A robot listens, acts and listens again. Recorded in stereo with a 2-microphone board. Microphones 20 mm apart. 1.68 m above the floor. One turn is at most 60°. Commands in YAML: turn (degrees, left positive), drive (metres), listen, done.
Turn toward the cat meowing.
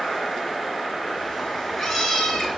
turn: 30
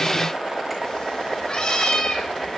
turn: 60
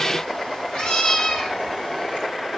turn: 55
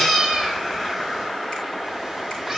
done: "Found it: a cat meowing, straight ahead, 2 to 4 m away."